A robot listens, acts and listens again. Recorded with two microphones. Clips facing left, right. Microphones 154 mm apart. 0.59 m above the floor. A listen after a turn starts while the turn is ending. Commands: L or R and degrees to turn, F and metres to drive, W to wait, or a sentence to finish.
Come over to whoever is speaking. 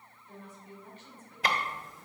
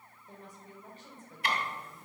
R35
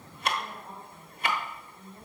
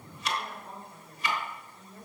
R105
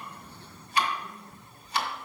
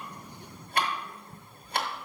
F1.0
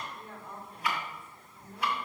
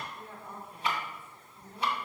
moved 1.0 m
F1.0
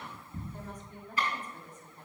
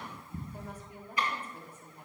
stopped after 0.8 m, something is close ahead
R15
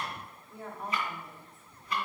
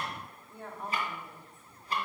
Arrived at the woman speaking, straight ahead.